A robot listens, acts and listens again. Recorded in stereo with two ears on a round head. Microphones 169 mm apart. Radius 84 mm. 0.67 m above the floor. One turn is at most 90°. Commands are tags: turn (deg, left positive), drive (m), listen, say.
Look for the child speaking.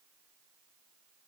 <listen/>
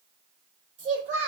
<turn deg="-45"/>
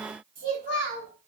<turn deg="-90"/>
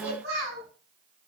<turn deg="-40"/>
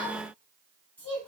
<turn deg="10"/>
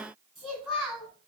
<say>Facing the child speaking, over 4 m away.</say>